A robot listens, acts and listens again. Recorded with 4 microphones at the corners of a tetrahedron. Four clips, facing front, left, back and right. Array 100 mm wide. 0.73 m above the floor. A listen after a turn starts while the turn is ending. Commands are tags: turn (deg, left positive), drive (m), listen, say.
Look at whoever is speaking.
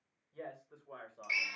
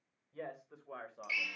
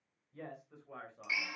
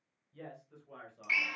<turn deg="65"/>
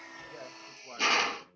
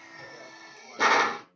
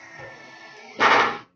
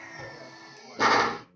<listen/>
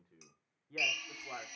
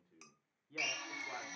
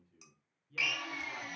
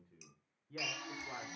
<say>Facing the man speaking.</say>